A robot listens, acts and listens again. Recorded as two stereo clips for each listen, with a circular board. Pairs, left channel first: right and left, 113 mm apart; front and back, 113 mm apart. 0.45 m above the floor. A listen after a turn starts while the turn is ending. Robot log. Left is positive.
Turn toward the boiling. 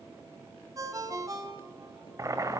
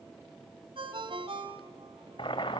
note: The boiling: 35° left.
cmd yaw +35
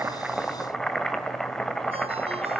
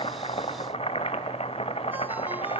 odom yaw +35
end: Found it: boiling, straight ahead, 1 to 2 m away.